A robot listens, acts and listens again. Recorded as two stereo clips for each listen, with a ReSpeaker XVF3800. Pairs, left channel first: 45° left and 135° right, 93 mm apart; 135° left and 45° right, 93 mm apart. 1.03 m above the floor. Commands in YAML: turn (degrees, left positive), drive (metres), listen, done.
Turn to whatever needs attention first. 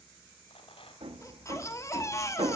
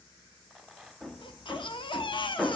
turn: 105
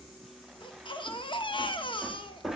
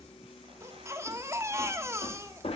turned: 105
turn: 15
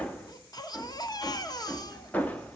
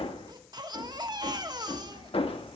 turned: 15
done: "Facing the baby crying, 1 to 2 m away."